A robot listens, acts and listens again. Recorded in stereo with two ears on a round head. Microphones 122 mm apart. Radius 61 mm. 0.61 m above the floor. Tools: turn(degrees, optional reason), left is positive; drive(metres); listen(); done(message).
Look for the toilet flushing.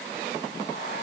listen()
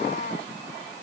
listen()
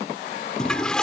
turn(degrees=30)
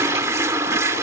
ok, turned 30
turn(degrees=-25, reason="So it is at 25° right.")
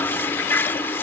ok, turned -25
turn(degrees=20, reason="The toilet flushing is now 20° left.")
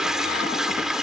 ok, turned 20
done("Facing the toilet flushing.")